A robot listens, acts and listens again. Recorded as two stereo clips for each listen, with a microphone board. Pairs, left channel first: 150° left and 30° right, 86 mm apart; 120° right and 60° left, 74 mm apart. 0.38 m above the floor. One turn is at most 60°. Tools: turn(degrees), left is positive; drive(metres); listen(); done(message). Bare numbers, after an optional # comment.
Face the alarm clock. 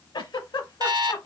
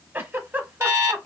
# The alarm clock: 10° left.
turn(10)
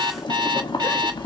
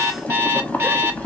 done("Facing the alarm clock.")